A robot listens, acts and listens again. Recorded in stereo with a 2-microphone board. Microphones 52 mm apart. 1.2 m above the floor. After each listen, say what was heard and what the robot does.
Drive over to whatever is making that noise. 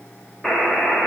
Turn 30° left.
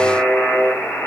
So it is at 135° left. Turn 135° left.
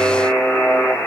The buzzer is now 45° left. Turn 45° left.
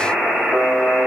The buzzer is now 10° right. Turn 10° right.
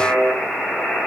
Drive 1.0 m forward.
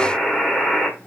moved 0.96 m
Drive 1.0 m forward.
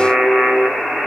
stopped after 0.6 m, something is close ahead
I am next to the buzzer.